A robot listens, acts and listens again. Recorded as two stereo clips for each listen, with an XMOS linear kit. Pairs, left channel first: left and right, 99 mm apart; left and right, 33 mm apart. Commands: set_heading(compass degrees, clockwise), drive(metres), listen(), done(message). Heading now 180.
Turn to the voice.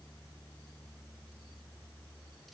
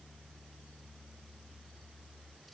listen()
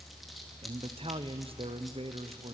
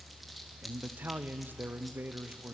set_heading(250)
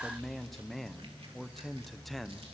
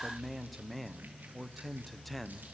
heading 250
done("Found it: a man speaking, straight ahead.")